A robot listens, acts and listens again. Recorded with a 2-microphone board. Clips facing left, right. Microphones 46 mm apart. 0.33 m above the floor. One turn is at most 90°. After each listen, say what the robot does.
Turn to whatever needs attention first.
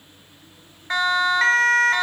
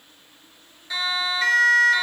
Turn 50° left.
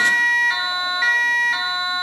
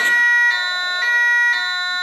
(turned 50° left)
Found it: a siren, straight ahead.